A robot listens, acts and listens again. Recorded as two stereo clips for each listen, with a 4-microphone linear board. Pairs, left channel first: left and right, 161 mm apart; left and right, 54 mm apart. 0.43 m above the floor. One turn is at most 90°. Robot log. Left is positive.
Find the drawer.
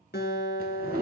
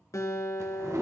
note: The drawer: about 65° right or 115° right.
cmd yaw -65
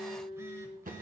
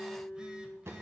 note: So it is at 55° right.
cmd yaw -55
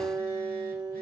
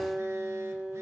cmd idle
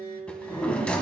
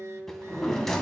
end: Facing the drawer, 1 to 2 m away.